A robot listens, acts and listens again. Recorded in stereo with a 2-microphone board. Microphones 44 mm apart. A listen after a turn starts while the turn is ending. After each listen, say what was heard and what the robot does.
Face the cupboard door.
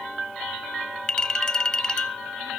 Keep listening.
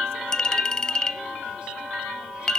Keep listening.
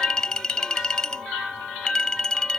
I can't make out a cupboard door to turn to.